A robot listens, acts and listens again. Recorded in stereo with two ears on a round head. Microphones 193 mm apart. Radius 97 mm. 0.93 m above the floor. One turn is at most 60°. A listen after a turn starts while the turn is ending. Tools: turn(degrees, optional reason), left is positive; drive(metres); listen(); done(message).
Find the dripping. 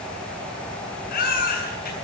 listen()
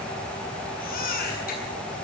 listen()
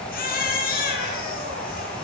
done("I can't make out dripping, only a baby crying.")